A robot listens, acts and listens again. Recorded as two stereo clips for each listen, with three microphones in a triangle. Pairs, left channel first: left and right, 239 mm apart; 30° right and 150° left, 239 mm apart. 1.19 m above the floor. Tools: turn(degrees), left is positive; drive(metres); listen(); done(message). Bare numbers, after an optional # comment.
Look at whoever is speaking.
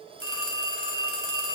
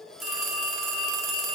listen()
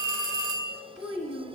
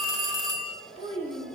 # The child speaking: 90° left.
turn(90)
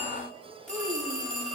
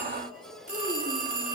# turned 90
listen()
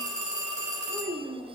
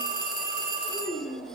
done("Facing the child speaking, 1 to 2 m away.")